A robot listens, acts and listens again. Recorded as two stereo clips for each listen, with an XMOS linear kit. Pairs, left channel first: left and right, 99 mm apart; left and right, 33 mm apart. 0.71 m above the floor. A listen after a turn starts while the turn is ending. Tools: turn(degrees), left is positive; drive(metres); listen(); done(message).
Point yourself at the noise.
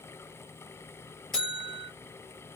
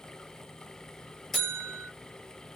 turn(degrees=30)
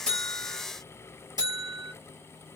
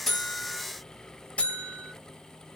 turn(degrees=145)
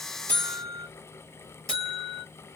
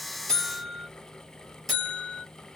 done("Facing the buzzer.")